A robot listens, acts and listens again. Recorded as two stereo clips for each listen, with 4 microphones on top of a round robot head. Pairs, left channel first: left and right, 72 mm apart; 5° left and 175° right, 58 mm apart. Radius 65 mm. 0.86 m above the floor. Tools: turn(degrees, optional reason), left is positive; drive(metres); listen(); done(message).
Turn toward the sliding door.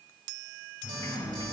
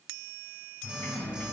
turn(degrees=65, reason="The sliding door: 65° left.")
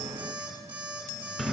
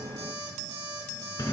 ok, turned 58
done("Facing the sliding door, 2 to 4 m away.")